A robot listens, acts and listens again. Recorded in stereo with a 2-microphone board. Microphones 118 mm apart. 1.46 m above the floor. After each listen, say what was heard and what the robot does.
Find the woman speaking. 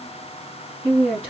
Turn 30° right.
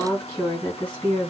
So it is at 15° left. Turn 15° left.
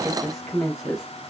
Found it: a woman speaking, straight ahead, 2 to 4 m away.